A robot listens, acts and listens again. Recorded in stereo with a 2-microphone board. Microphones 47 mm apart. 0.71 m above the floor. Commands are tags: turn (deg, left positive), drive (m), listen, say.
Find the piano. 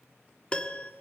<turn deg="25"/>
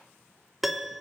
<say>Found it: a piano, straight ahead.</say>